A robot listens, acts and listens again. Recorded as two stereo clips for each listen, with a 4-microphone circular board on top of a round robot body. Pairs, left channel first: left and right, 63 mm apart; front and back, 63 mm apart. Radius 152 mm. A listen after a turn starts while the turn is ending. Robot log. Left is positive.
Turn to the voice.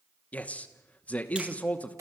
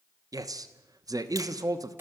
note: The man speaking: 160° left.
cmd yaw +160
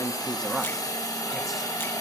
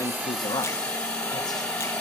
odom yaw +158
cmd idle
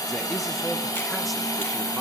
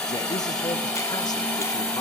cmd idle
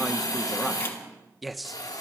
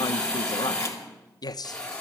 end: Found it: a man speaking, straight ahead, 1 to 2 m away.